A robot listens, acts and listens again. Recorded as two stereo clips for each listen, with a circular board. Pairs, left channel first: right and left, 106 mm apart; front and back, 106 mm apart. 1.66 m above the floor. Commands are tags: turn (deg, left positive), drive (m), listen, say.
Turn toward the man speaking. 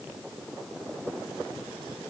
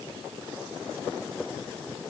<listen/>
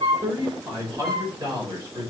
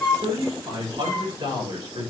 <turn deg="140"/>
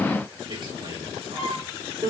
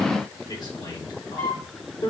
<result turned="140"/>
<turn deg="45"/>
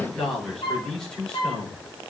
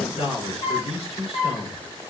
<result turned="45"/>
<turn deg="-10"/>
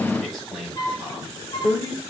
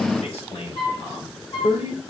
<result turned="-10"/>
<say>Facing the man speaking, over 4 m away.</say>